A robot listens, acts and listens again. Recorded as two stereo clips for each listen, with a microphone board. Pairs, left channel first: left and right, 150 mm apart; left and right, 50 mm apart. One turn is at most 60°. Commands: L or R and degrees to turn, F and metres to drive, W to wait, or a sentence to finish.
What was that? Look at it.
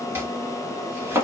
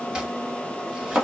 R15
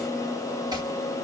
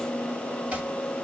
W
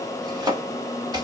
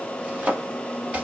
R60
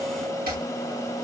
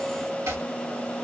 R60
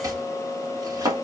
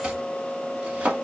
R25
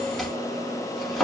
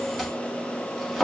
Found it: chopping, straight ahead.